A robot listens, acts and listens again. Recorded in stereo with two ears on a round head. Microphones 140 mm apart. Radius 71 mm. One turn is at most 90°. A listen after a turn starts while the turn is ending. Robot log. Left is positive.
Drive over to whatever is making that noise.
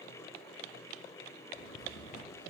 cmd yaw +90
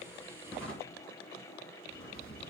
note: So it is at 10° left.
cmd yaw +10
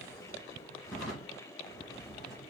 cmd fwd 1.0
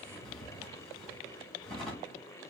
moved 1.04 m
cmd fwd 1.0
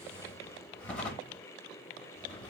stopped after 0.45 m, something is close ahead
note: The drawer is now 10° left.
cmd yaw +10
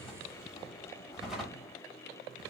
end: Arrived at the drawer, straight ahead.